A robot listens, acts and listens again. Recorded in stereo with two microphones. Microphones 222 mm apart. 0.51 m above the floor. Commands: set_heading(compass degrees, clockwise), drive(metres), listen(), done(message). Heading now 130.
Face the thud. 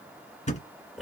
set_heading(100)
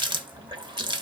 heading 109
listen()
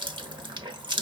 done("I heard a thud, but can't make it out now. It was about 10° left or 130° left.")